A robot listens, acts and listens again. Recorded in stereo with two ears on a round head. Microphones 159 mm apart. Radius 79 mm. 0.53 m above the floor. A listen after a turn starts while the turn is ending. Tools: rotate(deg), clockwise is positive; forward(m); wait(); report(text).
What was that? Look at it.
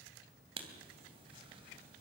rotate(35)
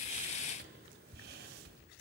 rotate(105)
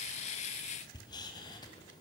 rotate(-25)
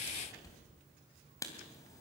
rotate(-20)
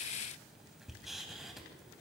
report("Facing the writing.")